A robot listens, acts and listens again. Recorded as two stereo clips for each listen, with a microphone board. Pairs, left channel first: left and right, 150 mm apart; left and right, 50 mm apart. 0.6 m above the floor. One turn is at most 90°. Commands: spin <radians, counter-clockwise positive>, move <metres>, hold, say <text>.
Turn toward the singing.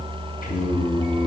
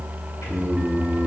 spin 1.22
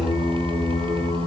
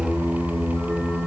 spin 0.61
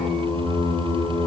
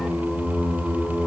spin 0.44
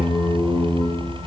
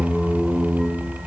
say Found it: singing, straight ahead.